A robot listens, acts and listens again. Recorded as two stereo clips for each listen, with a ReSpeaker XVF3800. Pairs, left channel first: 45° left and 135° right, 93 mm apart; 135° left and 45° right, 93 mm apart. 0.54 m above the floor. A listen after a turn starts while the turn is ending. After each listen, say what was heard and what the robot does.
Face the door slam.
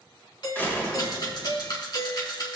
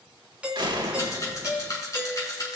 The door slam: 20° right. Turn 20° right.
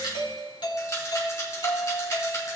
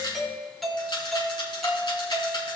I heard a door slam from this way, but can't make it out now.